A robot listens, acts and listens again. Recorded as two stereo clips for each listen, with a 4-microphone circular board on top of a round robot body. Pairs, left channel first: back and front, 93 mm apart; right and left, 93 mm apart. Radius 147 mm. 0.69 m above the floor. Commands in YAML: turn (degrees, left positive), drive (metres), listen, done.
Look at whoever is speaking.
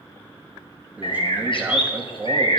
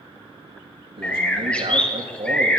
turn: 70
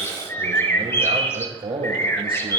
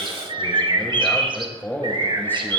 turn: -20
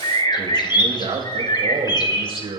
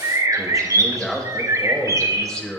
done: "Facing the man speaking."